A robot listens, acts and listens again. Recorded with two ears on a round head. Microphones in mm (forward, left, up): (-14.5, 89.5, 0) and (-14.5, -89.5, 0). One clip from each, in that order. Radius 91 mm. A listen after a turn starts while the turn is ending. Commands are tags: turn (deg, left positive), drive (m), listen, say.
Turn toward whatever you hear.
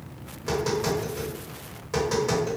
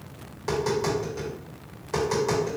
<turn deg="30"/>
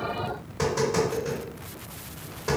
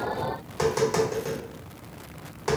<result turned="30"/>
<turn deg="-30"/>
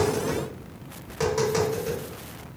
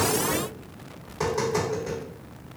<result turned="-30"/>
<turn deg="10"/>
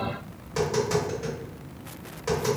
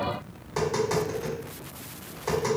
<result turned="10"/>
<say>Facing the tapping.</say>